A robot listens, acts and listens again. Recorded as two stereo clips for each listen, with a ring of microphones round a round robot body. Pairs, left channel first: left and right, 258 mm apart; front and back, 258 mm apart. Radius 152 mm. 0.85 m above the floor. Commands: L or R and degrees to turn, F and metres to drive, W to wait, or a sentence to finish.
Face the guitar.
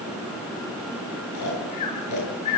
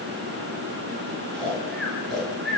W
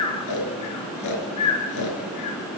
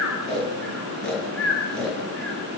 W
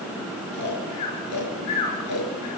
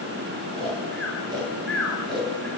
I can't make out a guitar, only snoring.